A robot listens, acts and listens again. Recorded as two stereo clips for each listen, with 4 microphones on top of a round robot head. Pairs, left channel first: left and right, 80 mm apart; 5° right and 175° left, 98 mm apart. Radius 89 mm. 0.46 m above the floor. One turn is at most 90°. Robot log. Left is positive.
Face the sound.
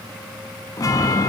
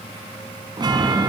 note: The chime: 135° left.
cmd yaw +90
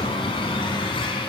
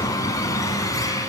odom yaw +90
note: The chime is now 55° left.
cmd yaw +55
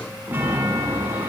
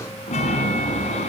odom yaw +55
note: The chime is now 15° right.
cmd yaw -15
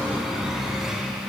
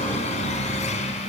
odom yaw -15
end: Facing the chime.